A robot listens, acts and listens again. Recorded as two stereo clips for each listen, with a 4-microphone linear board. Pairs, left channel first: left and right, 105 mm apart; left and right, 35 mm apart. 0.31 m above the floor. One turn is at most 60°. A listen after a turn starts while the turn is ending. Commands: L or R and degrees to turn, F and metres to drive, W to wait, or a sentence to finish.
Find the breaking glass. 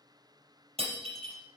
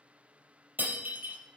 R60
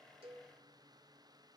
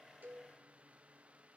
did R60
W
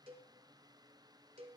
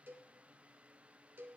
I heard breaking glass, but can't make it out now. It was about 10° right or 50° right.